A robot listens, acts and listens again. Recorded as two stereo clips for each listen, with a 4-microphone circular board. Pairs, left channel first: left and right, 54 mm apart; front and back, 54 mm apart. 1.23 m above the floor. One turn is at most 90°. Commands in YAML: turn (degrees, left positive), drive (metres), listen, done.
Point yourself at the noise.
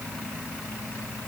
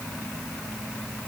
listen: true
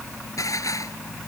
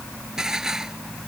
turn: 90
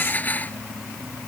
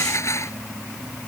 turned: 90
turn: 35
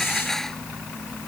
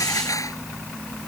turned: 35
turn: 10
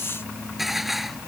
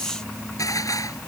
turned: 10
done: "Facing the dishes clattering."